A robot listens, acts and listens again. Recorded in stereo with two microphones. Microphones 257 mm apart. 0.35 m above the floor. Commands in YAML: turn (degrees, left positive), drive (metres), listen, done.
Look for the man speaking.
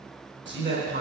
turn: -50
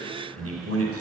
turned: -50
turn: -80
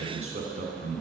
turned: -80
turn: -30
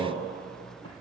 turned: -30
turn: 10
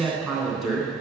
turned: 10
done: "Found it: a man speaking, straight ahead, 2 to 4 m away."